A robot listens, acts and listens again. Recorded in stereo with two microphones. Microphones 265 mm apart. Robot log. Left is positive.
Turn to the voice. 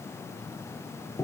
cmd idle
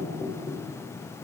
cmd idle
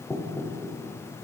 end: I can't make out anyone speaking to turn to.